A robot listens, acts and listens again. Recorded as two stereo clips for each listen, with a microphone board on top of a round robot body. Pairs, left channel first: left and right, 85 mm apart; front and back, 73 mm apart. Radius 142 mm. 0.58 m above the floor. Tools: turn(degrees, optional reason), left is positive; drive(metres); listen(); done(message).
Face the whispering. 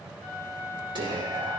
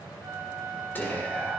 turn(degrees=-65, reason="The whispering: 65° right.")
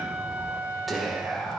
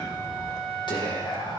done("Found it: whispering, straight ahead.")